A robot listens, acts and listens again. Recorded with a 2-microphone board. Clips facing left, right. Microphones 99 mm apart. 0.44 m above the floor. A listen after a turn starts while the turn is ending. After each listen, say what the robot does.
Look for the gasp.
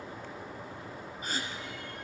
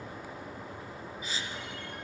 Turn 50° left.
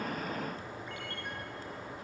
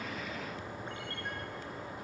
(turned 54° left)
Keep listening.
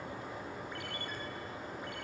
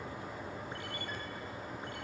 I heard a gasp, but can't make it out now. It was about 5° right or 75° left.